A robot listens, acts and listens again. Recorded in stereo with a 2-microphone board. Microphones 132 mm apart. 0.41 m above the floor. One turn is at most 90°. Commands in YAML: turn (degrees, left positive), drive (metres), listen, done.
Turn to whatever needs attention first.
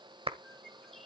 listen: true
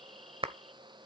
listen: true
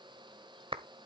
done: "I can't make out anything urgent to turn to."